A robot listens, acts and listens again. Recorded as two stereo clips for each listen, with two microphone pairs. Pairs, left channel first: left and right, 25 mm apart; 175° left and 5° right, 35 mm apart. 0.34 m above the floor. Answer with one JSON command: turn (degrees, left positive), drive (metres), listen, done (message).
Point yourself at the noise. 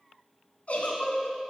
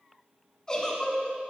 {"turn": 105}
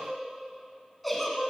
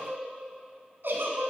{"done": "Found it: a giggle, straight ahead."}